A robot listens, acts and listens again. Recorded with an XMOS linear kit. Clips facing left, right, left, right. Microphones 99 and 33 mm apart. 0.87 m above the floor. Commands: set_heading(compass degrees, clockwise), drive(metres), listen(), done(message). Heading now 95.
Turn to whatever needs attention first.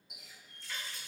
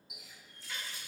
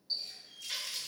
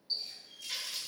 listen()
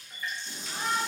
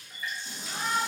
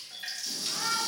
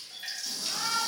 set_heading(155)
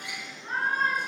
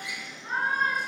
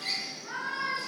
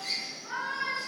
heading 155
set_heading(170)
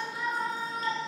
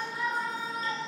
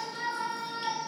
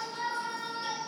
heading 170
done("Facing the shout.")